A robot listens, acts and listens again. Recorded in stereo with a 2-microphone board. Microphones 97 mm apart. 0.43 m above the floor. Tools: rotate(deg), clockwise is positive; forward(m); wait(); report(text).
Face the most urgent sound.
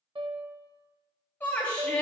rotate(-20)
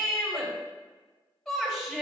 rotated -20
report("Found it: a shout, straight ahead, 2 to 4 m away.")